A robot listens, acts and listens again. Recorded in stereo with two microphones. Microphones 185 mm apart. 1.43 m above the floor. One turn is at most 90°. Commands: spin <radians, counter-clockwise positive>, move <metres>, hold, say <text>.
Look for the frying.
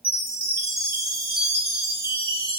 hold
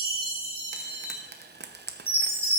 spin -1.13
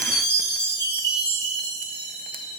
hold
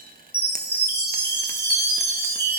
hold
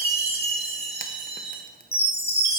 say I heard frying, but can't make it out now. It was about straight ahead or 50° right.